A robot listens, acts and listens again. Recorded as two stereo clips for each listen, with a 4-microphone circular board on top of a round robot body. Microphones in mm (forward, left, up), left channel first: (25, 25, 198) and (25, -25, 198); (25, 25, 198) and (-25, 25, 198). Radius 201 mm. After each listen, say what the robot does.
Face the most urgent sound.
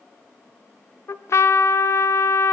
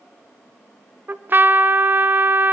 Keep listening.
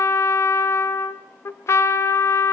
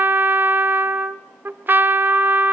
Keep listening.
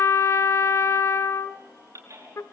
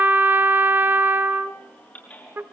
Turn 60° right.
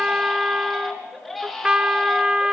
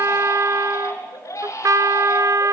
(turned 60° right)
Facing the baby crying.